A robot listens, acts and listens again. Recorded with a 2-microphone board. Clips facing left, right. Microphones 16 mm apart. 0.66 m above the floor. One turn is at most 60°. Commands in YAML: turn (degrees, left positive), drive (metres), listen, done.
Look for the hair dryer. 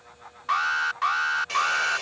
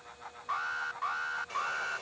turn: 60
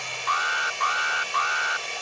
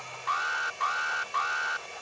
turn: 60
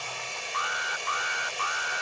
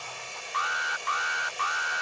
turn: 20
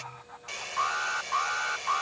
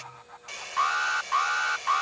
done: "Facing the hair dryer."